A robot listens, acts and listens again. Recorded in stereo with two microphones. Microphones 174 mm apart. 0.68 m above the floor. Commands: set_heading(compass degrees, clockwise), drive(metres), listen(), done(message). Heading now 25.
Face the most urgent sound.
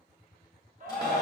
set_heading(70)
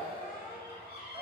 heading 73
listen()
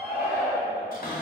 set_heading(83)
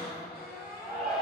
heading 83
done("Found it: a shout, straight ahead.")